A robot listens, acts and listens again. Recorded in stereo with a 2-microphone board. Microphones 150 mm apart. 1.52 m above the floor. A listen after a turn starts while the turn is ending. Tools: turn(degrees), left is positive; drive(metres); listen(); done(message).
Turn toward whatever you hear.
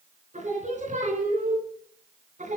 turn(degrees=-60)
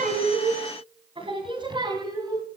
turn(degrees=-30)
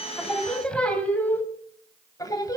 turn(degrees=25)
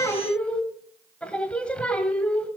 done("Found it: singing, straight ahead.")